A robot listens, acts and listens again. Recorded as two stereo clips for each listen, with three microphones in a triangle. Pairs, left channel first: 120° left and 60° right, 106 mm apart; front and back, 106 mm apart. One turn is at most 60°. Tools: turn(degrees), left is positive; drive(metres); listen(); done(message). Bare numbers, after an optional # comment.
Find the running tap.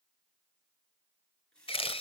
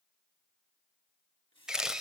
# The running tap: 40° left.
turn(40)
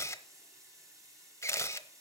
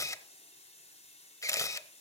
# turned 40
done("Found it: a running tap, straight ahead.")